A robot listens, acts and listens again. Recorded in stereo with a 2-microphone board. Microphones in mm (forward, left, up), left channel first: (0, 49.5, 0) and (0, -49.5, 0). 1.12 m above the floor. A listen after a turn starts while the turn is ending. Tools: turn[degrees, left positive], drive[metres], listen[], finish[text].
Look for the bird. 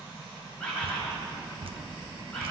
Action: turn[30]
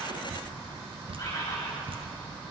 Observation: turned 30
Thought: So it is at 140° left.
Action: turn[140]
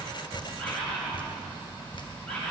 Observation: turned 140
Thought: The bird is now 10° left.
Action: turn[10]
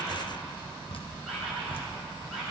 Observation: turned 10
Action: listen[]
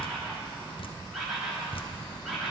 Action: finish[Facing the bird.]